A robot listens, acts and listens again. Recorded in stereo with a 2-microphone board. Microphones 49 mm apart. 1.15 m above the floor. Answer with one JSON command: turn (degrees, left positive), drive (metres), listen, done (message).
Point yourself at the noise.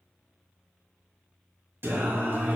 {"turn": -40}
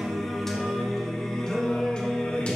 {"turn": 25}
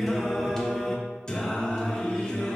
{"turn": 15}
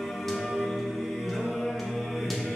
{"done": "Facing the singing."}